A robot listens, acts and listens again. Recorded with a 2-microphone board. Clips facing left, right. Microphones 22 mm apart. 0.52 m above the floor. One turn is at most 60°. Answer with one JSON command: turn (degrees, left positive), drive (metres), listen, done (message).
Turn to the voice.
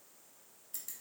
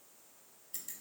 {"listen": true}
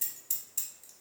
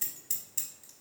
{"listen": true}
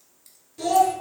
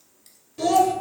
{"turn": -15}
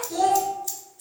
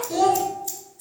{"turn": -60}
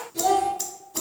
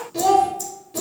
{"turn": -60}
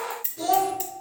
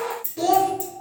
{"turn": -50}
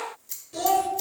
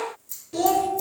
{"turn": -20}
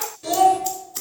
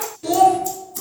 {"done": "Facing the child speaking, under 1 m away."}